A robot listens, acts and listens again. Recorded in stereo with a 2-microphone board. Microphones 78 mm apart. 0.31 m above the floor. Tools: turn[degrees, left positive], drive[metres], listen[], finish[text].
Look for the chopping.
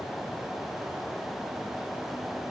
Action: listen[]
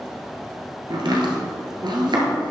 Thought: The chopping: about 75° right or 105° right.
Action: turn[-75]
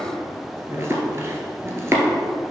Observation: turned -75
Thought: So it is at 35° right.
Action: turn[-35]
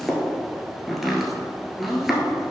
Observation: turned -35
Action: finish[Facing the chopping.]